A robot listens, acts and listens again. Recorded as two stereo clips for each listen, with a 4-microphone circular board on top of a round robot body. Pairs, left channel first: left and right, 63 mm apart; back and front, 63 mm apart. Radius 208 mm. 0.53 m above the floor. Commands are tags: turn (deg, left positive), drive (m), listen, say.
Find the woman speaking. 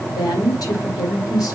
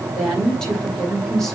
<turn deg="95"/>
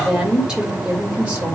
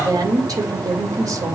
<turn deg="-20"/>
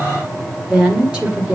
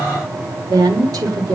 <turn deg="-20"/>
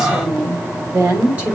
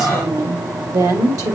<turn deg="-20"/>
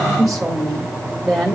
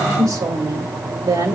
<say>Found it: a woman speaking, straight ahead.</say>